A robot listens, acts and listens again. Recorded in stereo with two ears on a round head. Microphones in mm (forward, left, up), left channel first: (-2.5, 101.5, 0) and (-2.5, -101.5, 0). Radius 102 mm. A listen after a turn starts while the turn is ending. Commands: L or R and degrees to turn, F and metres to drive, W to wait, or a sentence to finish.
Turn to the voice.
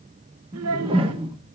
R75
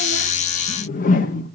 W
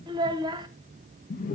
R20
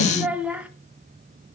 Found it: a child speaking, straight ahead.